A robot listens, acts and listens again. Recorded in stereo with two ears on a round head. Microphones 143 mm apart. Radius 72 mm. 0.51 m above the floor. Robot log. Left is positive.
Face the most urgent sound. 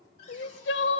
note: The crying: about 75° left or 105° left.
cmd yaw +75
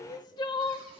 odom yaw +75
note: So it is at 25° left.
cmd yaw +25
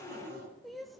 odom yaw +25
end: Facing the crying, under 1 m away.